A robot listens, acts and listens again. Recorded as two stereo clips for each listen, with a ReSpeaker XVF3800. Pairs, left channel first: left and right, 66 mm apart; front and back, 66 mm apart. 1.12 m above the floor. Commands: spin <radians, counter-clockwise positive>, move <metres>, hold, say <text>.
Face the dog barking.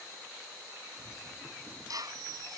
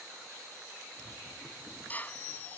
hold
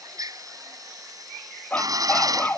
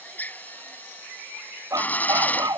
spin 2.79
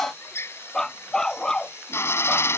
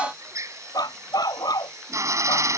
spin 0.17
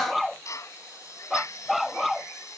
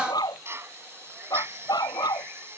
say Facing the dog barking.